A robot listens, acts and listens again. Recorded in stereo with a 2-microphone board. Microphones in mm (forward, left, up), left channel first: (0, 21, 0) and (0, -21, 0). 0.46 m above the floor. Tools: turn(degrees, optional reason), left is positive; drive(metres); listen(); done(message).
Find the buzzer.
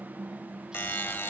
turn(degrees=60, reason="The buzzer: about 60° left or 120° left.")
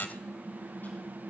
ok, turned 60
turn(degrees=55, reason="So it is at 55° left.")
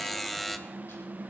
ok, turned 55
done("Found it: a buzzer, straight ahead.")